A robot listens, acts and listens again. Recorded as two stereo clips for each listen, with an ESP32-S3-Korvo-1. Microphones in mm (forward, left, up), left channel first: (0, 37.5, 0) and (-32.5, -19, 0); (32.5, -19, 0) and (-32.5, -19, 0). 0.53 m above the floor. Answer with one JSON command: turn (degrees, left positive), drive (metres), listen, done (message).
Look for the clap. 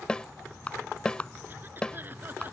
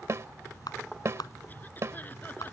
{"turn": -10}
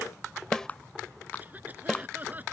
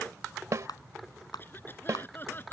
{"done": "Facing the clap."}